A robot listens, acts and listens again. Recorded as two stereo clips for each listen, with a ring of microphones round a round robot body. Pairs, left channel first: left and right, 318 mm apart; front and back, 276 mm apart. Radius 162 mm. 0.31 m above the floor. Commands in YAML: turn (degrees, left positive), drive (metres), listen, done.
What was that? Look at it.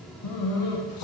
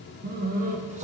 turn: 115
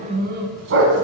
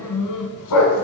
turn: -40
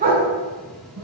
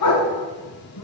turn: -30
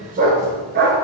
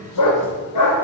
turn: -30
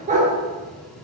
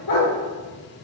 turn: -20
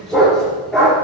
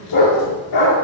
done: "Facing the dog barking."